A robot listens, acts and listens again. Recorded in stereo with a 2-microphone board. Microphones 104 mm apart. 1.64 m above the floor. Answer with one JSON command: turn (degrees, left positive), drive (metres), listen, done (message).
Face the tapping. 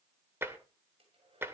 {"turn": -20}
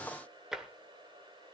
{"done": "Found it: tapping, straight ahead."}